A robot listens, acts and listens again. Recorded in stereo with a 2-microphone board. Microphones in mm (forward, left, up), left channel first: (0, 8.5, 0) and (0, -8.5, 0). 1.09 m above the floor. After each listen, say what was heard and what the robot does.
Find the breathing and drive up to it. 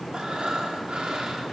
The breathing: about 65° right or 115° right. Turn 65° right.
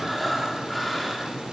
Drive 1.0 m forward.
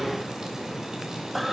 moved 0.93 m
Drive 1.0 m forward.
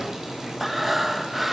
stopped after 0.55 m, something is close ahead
The breathing is now 10° right. Turn 10° right.
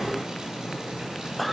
I am next to the breathing.